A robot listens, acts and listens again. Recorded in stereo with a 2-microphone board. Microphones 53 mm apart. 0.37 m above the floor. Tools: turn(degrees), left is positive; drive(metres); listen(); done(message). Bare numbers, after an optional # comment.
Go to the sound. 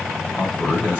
# The man speaking: about 40° left or 140° left.
turn(40)
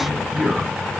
drive(1.0)
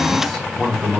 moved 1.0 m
drive(1.0)
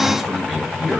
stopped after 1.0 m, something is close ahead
# The man speaking is now 15° right.
turn(-15)
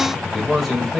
done("I am next to the man speaking.")